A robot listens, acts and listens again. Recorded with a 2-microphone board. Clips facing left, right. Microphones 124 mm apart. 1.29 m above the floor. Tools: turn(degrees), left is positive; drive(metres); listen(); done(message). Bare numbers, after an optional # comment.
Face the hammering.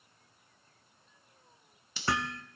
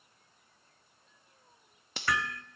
# The hammering: about 30° left or 150° left.
turn(30)
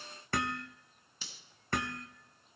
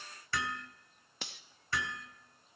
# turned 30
# So it is at 115° left.
turn(115)
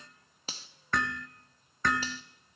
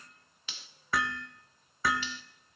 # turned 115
done("Facing the hammering, 1 to 2 m away.")